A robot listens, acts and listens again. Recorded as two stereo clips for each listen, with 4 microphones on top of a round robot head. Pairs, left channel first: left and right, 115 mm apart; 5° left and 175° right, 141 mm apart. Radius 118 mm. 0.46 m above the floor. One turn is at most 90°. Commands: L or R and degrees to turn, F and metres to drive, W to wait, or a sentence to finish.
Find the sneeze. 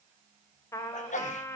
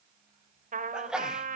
L90
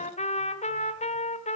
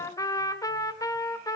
L10
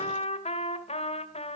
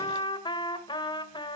I heard a sneeze from this way, but can't make it out now.